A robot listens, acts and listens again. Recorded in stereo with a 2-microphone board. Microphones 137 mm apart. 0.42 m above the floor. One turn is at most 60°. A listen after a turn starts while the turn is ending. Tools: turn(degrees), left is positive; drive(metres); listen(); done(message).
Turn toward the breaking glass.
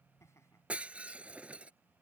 turn(degrees=-30)
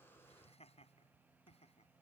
listen()
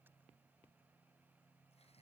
done("I heard breaking glass, but can't make it out now. It was about 20° left or 140° right.")